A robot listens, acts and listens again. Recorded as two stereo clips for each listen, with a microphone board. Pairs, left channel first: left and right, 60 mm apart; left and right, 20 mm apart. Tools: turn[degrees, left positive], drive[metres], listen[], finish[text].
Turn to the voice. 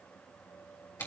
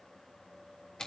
Action: listen[]
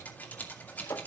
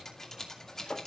Action: listen[]
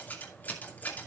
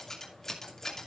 Action: finish[I can't make out anyone speaking to turn to.]